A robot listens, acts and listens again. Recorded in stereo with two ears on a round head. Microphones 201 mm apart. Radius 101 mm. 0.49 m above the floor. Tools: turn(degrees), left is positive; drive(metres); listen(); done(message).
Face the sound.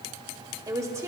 turn(degrees=-30)
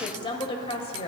turn(degrees=30)
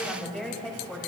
done("Facing the woman speaking.")